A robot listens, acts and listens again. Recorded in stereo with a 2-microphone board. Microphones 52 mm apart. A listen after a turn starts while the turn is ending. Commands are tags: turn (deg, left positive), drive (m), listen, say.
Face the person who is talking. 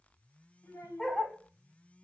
<turn deg="70"/>
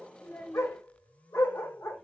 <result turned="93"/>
<turn deg="20"/>
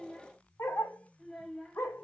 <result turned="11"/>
<say>Facing the child speaking, 1 to 2 m away.</say>